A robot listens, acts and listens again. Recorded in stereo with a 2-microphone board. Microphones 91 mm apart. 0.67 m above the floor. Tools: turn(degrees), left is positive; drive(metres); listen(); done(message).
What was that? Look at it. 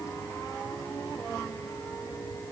listen()
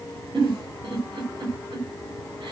turn(degrees=-65)
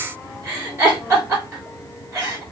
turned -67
turn(degrees=-35)
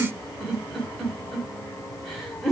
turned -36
done("Facing the giggle.")